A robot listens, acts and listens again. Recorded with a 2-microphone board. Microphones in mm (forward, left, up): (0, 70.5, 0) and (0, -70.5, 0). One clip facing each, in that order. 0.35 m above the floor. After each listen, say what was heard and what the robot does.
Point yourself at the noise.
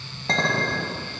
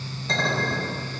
The clink: about 70° left or 110° left. Turn 70° left.
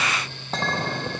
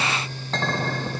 So it is at 15° left. Turn 15° left.
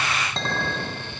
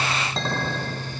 Facing the clink, 1 to 2 m away.